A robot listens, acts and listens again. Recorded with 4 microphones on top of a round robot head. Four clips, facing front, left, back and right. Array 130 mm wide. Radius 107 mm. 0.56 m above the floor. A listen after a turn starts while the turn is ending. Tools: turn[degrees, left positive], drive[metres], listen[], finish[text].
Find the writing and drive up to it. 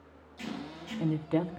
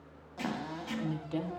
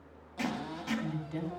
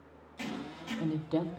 Thought: The writing: straight behind.
Action: turn[180]
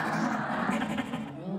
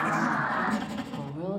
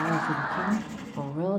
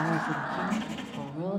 Thought: The writing is now 25° left.
Action: turn[25]
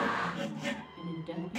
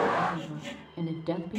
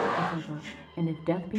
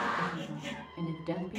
Action: drive[1.0]
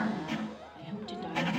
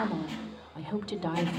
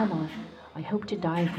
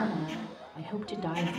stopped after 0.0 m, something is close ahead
Thought: The writing is now 15° left.
Action: turn[15]
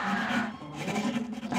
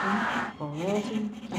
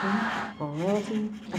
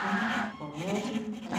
Action: finish[Blocked. The writing is further on, straight ahead.]